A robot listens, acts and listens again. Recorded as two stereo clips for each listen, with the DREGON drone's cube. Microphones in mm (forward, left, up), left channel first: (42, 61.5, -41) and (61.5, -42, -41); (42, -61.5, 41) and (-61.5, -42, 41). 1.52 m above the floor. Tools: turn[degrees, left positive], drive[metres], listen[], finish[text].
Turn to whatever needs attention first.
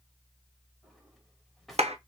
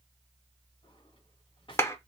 Action: listen[]
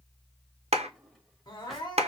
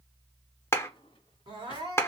Thought: The crying: 140° left.
Action: turn[140]
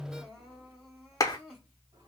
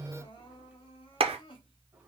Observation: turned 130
Thought: The crying is now 10° left.
Action: turn[10]
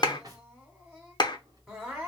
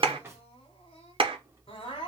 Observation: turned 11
Action: finish[Facing the crying.]